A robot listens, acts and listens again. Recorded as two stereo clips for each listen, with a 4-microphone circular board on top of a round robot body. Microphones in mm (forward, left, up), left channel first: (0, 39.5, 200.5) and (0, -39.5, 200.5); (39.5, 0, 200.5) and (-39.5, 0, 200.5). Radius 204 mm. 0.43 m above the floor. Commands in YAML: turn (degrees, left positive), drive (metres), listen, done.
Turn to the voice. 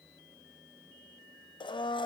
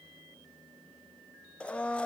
listen: true
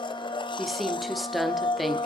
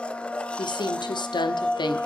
done: "Facing the woman speaking."